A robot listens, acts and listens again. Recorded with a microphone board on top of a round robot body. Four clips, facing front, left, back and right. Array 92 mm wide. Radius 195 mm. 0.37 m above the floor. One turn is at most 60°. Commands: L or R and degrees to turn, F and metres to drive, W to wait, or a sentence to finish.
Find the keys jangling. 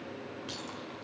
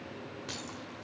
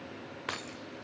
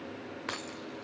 R60
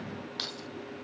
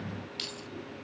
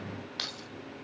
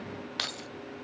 R60
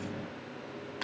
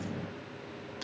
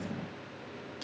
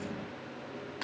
R40
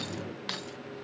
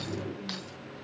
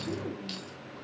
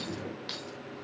Found it: keys jangling, straight ahead, 2 to 4 m away.